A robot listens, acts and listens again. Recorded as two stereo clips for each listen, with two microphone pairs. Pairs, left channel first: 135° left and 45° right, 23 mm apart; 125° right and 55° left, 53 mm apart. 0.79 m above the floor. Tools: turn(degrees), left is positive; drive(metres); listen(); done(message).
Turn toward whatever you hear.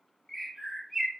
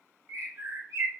turn(degrees=50)
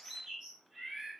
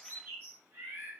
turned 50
turn(degrees=20)
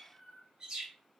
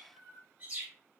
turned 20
done("Found it: a bird, straight ahead, 1 to 2 m away.")